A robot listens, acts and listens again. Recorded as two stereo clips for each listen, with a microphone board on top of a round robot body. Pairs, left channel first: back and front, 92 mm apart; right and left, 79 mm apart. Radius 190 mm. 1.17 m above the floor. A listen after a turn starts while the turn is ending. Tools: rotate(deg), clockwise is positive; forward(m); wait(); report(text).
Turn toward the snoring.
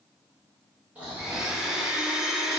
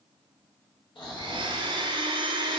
rotate(75)
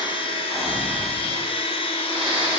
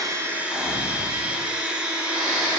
rotate(-10)
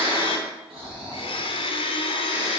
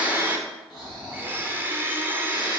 report("Found it: snoring, straight ahead, 2 to 4 m away.")